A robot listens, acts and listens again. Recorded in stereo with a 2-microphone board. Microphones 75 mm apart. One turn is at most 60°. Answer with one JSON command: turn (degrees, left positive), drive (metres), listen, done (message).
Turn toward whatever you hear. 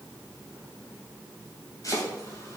{"turn": 50}
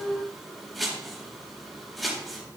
{"done": "Facing the chopping, 2 to 4 m away."}